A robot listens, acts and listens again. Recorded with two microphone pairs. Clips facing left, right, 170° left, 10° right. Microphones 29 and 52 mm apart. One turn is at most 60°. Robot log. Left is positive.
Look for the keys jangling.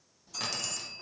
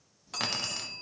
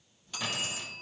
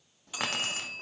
note: The keys jangling: 40° right.
cmd yaw -40
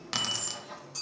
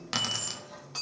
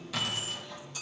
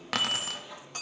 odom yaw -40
note: The keys jangling is now 10° right.
cmd yaw -10
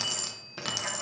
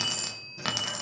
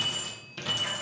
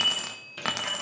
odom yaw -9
note: The keys jangling is now 30° right.
cmd yaw -30
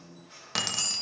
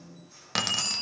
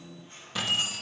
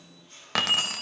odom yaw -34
note: The keys jangling is now 20° right.
cmd yaw -20
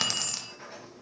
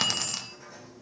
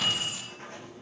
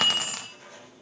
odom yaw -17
note: The keys jangling is now 15° right.
cmd yaw -15
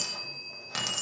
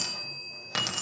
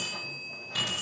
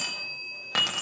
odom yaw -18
note: The keys jangling is now 20° right.
cmd yaw -20
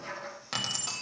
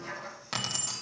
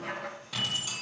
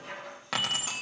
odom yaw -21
end: Facing the keys jangling.